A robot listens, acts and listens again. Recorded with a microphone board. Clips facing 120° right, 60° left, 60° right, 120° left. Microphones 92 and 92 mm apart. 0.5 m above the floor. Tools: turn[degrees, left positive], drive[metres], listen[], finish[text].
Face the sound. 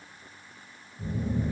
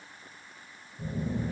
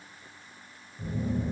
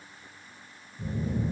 Thought: The phone buzzing: 10° left.
Action: turn[10]
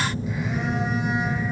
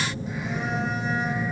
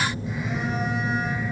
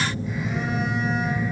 Action: finish[Facing the phone buzzing.]